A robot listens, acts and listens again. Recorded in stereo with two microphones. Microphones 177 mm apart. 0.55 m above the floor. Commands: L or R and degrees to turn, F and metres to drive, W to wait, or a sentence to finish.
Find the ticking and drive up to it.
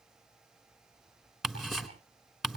L30
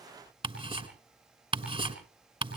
R30
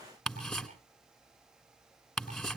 F1.0
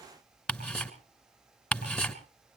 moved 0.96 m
F1.0
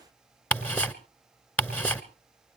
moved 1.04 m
L10
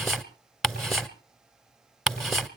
F1.0
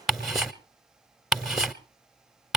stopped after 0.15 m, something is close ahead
I am next to the ticking.